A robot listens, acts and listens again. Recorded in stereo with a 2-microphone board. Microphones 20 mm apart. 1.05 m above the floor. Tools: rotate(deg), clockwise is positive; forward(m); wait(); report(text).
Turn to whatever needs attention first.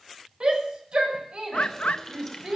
rotate(55)
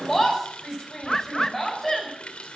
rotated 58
report("Facing the shout, over 4 m away.")